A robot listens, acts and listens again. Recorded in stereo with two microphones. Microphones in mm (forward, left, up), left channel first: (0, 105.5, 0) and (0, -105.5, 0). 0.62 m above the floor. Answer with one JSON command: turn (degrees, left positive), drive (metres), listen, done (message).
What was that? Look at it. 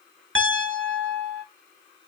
{"turn": -65}
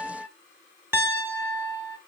{"turn": -10}
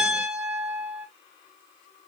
{"done": "Facing the piano, under 1 m away."}